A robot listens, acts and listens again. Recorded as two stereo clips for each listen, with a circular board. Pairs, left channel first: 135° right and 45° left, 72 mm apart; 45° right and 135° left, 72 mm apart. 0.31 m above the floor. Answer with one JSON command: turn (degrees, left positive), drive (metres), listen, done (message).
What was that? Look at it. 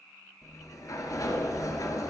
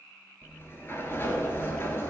{"turn": -100}
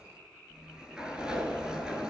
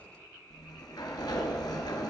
{"turn": -35}
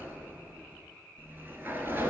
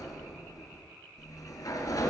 {"turn": -15}
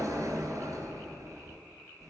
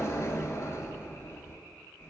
{"done": "Found it: a sliding door, straight ahead, 1 to 2 m away."}